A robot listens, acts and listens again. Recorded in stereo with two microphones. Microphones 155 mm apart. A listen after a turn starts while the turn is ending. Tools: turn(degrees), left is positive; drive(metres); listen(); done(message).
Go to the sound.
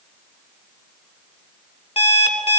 turn(degrees=40)
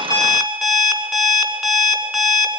drive(metres=1.0)
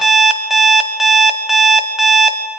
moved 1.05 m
drive(metres=1.0)
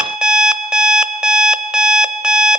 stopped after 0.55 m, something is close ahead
done("I am next to the alarm clock.")